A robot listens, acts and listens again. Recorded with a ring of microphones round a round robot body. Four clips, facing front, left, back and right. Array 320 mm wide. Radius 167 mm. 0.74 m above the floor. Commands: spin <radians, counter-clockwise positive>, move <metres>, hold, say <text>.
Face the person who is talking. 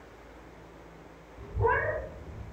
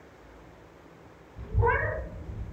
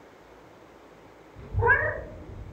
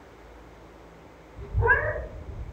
spin 2.09
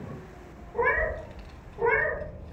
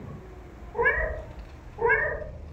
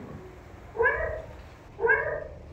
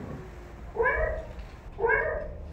say Found it: a child speaking, straight ahead, 2 to 4 m away.